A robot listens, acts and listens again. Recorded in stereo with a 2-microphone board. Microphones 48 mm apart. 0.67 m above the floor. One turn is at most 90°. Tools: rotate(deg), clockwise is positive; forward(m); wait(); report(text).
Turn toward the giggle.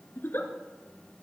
rotate(-50)
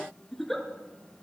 report("Facing the giggle, 1 to 2 m away.")